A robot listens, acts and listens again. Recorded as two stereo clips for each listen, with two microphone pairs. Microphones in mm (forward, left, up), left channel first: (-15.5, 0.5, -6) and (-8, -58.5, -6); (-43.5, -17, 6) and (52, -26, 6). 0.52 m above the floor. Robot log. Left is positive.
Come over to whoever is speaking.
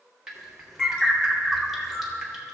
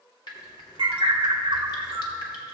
cmd idle
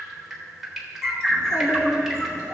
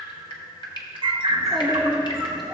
note: The child speaking: 80° left.
cmd yaw +80
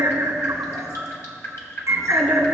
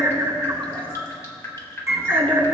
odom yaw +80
note: The child speaking is now 10° left.
cmd yaw +10
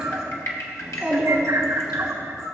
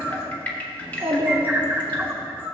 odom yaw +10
cmd fwd 1.0
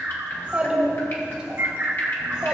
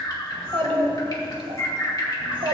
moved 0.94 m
note: The child speaking is now 10° right.
cmd yaw -10
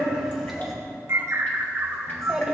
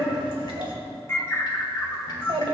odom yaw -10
cmd fwd 1.0
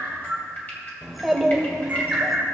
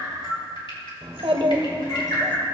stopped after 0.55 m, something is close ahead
end: I am next to the child speaking.